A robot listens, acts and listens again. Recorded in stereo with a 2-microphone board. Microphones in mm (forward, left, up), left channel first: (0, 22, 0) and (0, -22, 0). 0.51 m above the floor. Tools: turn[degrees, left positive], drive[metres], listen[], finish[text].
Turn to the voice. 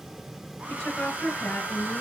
Thought: The woman speaking: about 15° left or 165° left.
Action: turn[15]
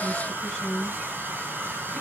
Action: finish[Facing the woman speaking, over 4 m away.]